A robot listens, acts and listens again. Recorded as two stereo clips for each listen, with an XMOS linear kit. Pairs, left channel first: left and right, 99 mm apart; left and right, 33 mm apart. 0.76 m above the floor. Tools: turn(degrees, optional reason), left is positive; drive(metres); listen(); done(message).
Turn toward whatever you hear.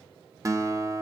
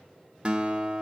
turn(degrees=-35, reason="The guitar: about 35° right or 145° right.")
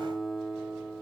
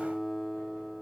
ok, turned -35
done("Facing the guitar, 1 to 2 m away.")